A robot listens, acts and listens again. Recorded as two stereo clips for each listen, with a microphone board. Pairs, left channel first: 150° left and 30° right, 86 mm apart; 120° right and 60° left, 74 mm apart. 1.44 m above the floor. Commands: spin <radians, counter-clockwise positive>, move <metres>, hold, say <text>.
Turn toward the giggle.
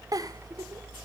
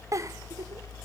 spin 0.26
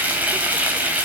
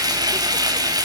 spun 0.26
hold
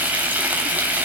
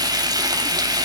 hold
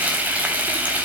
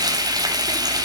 say Facing where the giggle came from. I can't hear it now.